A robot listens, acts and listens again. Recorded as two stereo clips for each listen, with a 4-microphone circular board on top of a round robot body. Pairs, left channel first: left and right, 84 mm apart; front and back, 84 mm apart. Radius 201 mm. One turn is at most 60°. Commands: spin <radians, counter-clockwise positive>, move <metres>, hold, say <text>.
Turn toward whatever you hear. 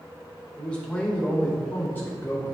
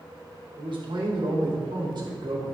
spin 1.05
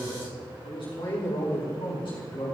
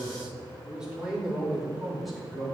spin 1.05
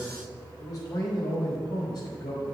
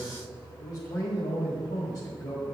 spin 0.79
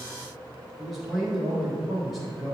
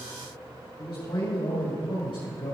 say Facing the man speaking.